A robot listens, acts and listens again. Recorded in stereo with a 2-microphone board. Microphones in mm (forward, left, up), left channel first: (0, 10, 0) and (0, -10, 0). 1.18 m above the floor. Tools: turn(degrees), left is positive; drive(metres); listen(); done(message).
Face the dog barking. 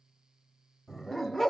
turn(degrees=25)
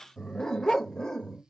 turn(degrees=30)
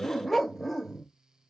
done("Found it: a dog barking, straight ahead, 1 to 2 m away.")